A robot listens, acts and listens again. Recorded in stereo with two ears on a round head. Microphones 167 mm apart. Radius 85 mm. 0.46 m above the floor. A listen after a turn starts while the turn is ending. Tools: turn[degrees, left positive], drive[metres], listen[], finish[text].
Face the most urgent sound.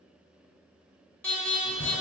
Action: turn[30]
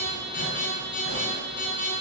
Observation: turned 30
Thought: So it is at 140° left.
Action: turn[140]
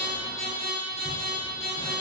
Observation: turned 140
Thought: The alarm is now 35° left.
Action: turn[35]
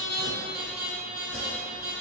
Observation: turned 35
Thought: The alarm is now 10° right.
Action: turn[-10]
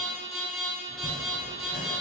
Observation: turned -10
Action: finish[Facing the alarm, 1 to 2 m away.]